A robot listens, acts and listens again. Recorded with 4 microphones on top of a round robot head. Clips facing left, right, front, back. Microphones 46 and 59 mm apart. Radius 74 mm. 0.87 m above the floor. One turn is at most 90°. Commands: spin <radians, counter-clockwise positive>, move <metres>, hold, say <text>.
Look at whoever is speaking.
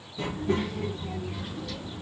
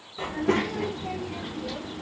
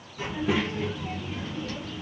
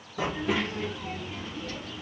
spin -1.57
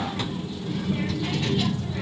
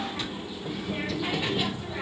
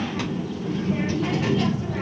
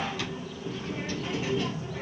spin -0.26
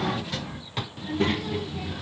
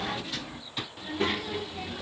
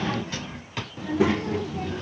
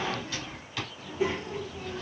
say Facing the child speaking.